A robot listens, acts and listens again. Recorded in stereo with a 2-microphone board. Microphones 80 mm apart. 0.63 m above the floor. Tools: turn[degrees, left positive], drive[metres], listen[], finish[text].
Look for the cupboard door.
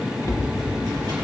Thought: The cupboard door: about 40° left or 140° left.
Action: turn[40]
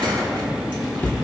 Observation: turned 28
Thought: So it is at 25° left.
Action: turn[25]
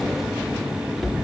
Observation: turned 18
Action: finish[Facing the cupboard door.]